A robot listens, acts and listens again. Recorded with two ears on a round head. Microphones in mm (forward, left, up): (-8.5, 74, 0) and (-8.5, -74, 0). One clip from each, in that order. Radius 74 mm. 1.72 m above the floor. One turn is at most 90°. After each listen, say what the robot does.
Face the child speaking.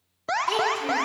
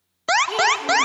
Turn 30° left.
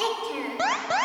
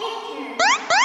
Turn 90° left.
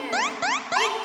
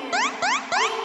Turn 75° left.
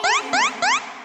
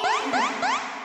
Keep listening.
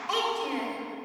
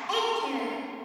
Turn 10° left.
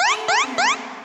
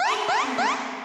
Facing the child speaking.